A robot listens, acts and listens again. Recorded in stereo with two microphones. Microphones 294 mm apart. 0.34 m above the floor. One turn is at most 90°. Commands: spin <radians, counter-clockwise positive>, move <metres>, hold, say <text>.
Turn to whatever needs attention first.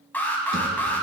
spin 0.52
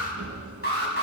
spin 1.57
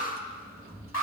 spin 1.13
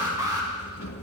spin -0.26
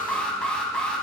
say Found it: an alarm, straight ahead.